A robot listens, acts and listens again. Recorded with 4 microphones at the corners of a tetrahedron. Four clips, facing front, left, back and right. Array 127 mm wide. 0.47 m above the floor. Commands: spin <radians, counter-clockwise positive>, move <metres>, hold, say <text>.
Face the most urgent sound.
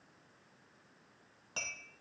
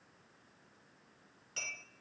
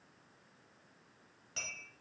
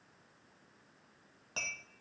hold
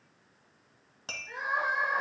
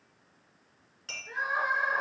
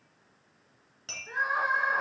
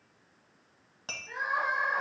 spin 2.88
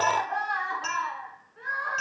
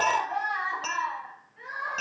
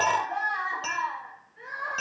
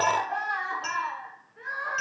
spin -0.44
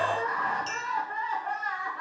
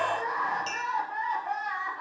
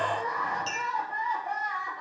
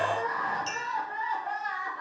say Found it: crying, straight ahead.